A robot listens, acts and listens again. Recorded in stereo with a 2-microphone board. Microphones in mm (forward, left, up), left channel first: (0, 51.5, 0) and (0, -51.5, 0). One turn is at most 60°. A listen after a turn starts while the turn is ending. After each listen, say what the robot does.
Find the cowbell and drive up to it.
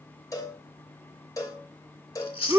Turn 35° left.
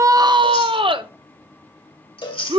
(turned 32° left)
Turn 60° left.
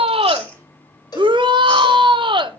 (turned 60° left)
Turn 50° left.
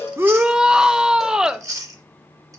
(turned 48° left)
Keep listening.
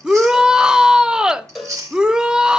Drive 1.0 m forward.
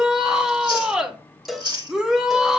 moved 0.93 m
Drive 1.0 m forward.
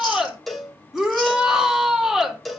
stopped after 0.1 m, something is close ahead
I am next to the cowbell.